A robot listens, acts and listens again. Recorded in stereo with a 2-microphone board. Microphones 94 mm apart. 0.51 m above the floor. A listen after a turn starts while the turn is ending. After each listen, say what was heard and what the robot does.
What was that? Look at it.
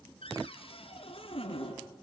Turn 90° left.
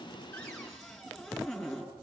Facing the cupboard door, over 4 m away.